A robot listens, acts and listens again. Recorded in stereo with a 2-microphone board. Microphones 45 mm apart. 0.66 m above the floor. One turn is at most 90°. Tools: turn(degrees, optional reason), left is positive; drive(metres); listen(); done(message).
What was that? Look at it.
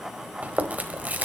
turn(degrees=-35, reason="The chewing: about 35° right or 145° right.")
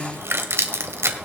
turn(degrees=-90, reason="So it is at 110° right.")
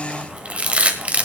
turn(degrees=-25, reason="The chewing is now 25° right.")
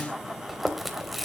done("Facing the chewing, 1 to 2 m away.")